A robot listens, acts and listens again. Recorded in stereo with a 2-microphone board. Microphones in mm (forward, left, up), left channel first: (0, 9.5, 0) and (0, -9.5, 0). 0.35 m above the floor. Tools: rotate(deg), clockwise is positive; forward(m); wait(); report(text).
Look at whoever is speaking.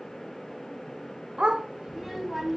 rotate(-30)
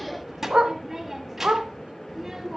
rotate(20)
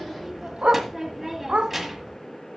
rotate(10)
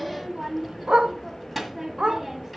report("Facing the child speaking, 1 to 2 m away.")